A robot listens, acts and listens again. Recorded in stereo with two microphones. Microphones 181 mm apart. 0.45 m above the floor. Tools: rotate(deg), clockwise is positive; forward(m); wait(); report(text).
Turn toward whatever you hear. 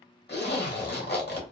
rotate(-65)
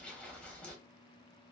report("Facing the zipper, under 1 m away.")